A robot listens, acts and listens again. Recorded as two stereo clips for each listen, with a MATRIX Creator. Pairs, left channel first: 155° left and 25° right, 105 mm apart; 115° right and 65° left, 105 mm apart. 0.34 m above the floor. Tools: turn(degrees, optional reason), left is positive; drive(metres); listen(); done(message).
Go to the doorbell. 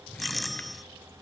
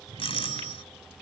turn(degrees=-110, reason="The doorbell: 110° right.")
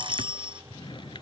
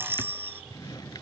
drive(metres=1.0)
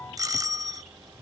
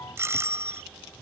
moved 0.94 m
turn(degrees=15, reason="The doorbell is now 15° left.")
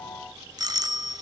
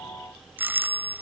drive(metres=1.0)
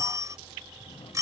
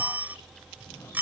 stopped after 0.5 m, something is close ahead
done("Arrived at the doorbell, straight ahead.")